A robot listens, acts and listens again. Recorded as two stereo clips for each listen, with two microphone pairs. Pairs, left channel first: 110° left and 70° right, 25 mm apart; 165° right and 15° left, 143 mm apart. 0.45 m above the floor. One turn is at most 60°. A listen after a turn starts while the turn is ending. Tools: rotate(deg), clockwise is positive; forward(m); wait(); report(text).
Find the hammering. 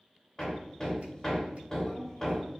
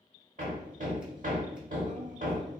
rotate(-35)
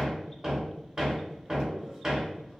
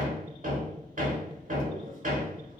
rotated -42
report("Found it: hammering, straight ahead, under 1 m away.")